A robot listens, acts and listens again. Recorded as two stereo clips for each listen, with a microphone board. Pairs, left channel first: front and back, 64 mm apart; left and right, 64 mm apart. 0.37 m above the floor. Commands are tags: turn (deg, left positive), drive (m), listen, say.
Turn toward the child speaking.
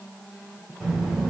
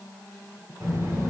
<turn deg="-100"/>
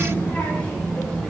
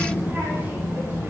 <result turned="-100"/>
<turn deg="-80"/>
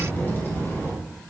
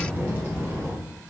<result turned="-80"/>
<turn deg="-50"/>
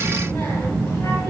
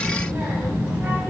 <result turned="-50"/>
<turn deg="-35"/>
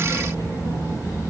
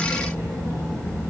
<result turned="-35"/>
<turn deg="15"/>
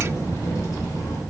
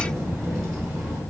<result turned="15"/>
<say>Found it: a child speaking, straight ahead.</say>